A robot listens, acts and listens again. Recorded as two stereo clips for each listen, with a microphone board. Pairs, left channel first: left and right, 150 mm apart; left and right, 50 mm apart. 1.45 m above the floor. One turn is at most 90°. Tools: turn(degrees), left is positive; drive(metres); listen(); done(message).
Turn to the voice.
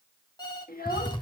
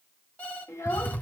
turn(degrees=90)
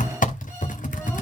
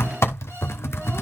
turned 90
listen()
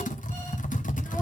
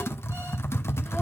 listen()
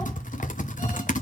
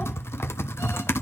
done("I heard a child speaking from this way, but can't make it out now.")